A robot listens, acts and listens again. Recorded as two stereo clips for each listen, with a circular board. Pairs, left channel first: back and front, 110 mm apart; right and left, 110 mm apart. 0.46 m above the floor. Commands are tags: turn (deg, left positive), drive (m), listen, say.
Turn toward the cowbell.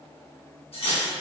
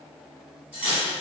<listen/>
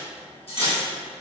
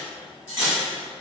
<listen/>
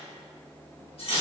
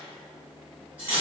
<say>I can't make out a cowbell, only cutlery clinking.</say>